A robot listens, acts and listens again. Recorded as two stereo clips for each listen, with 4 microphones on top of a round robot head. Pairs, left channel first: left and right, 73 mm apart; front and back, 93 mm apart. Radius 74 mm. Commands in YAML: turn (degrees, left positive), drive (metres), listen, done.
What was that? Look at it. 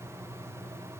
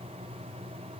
listen: true
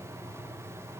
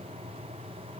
listen: true
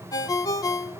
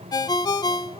turn: 45
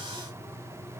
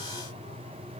listen: true
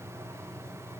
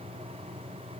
listen: true
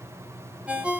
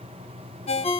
turn: -10
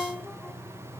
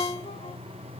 done: "Facing the ringtone, 1 to 2 m away."